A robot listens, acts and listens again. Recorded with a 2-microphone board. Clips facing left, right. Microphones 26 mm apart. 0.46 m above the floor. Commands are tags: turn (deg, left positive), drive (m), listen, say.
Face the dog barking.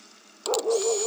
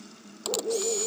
<turn deg="90"/>
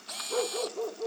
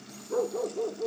<turn deg="20"/>
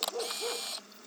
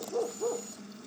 <say>Found it: a dog barking, straight ahead.</say>